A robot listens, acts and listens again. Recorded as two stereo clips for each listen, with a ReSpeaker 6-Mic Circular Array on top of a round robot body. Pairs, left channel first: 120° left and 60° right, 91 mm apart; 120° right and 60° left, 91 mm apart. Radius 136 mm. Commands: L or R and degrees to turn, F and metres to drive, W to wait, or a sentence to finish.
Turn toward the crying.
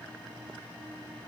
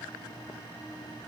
W
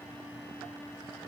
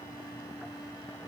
W
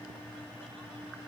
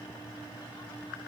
I can't make out crying to turn to.